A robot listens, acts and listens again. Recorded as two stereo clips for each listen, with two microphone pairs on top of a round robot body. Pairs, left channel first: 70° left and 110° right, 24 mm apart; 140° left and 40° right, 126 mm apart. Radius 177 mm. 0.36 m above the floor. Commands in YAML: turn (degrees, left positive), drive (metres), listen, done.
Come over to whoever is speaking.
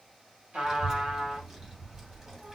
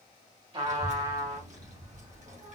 turn: -40
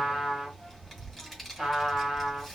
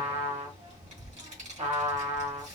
turn: -25
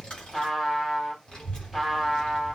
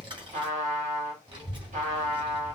turn: 10
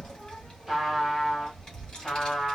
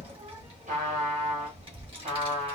drive: 1.0
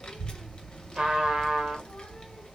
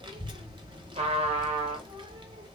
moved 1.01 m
drive: 1.0
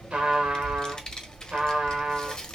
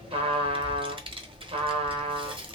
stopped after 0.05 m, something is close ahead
done: "I am next to the child speaking."